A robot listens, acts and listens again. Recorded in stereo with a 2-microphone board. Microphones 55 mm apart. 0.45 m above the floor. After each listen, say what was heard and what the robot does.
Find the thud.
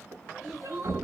The thud: about 60° right or 120° right. Turn 60° right.
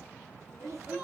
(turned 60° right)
Keep listening.
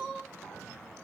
I heard a thud, but can't make it out now. It was about straight ahead or 60° right.